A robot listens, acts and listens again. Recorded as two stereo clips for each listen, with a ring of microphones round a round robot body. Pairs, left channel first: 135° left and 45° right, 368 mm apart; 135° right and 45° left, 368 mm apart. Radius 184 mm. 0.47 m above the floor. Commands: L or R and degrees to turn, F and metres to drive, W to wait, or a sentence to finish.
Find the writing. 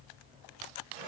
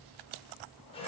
W
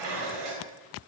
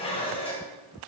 W
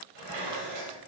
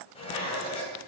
I can't make out writing to turn to.